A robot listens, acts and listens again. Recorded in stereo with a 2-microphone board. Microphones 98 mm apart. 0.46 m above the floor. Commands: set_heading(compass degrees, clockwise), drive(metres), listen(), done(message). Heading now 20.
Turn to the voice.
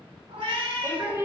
set_heading(45)
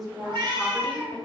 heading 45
done("Facing the woman speaking.")